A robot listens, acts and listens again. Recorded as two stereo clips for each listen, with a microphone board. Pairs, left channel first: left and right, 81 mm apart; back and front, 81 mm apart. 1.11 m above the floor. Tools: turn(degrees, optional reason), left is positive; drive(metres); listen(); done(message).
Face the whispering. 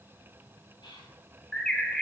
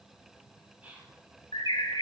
turn(degrees=70, reason="The whispering: 70° left.")
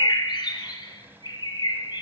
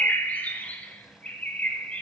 listen()
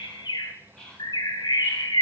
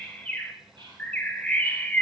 turn(degrees=10, reason="The whispering is now 10° left.")
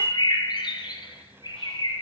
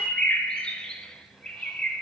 listen()
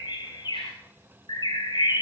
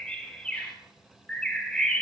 listen()
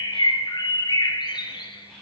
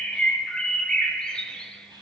done("Facing the whispering, 2 to 4 m away.")